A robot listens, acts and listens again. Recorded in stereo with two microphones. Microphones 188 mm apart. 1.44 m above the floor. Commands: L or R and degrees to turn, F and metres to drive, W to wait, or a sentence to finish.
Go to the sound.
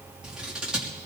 R30
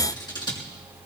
L25
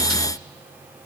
W
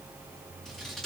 F1.0
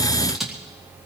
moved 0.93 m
F1.0
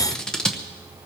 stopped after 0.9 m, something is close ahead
I am next to the scissors.